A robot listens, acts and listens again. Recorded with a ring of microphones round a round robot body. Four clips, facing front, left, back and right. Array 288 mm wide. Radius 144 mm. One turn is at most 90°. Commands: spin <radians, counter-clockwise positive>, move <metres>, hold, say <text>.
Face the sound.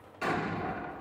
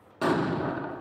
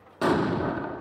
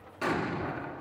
spin 1.57
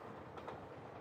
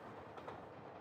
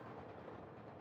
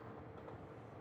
spin 1.05
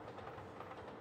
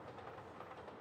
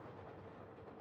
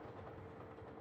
say I heard an explosion from this way, but can't make it out now.